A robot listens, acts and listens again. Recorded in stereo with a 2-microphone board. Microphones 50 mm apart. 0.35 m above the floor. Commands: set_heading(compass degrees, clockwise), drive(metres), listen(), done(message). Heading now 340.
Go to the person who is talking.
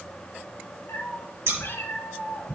listen()
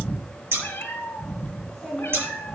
set_heading(310)
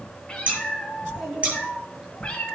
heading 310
set_heading(335)
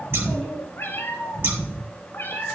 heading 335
drive(1.0)
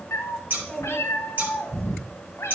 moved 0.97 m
drive(1.0)
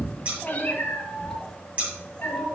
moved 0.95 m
drive(1.0)
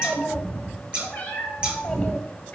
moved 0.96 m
drive(1.0)
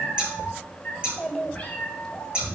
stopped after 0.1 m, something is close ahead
done("Arrived at the child speaking, straight ahead.")